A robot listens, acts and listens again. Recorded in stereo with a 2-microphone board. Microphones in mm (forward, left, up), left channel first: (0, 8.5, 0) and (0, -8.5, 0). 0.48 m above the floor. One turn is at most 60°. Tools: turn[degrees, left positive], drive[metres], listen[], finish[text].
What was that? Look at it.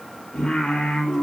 Thought: The singing: about 60° left or 120° left.
Action: turn[60]
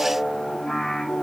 Thought: So it is at 55° left.
Action: turn[55]
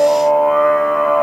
Thought: The singing is now 20° left.
Action: turn[20]
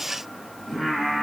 Action: finish[Facing the singing, over 4 m away.]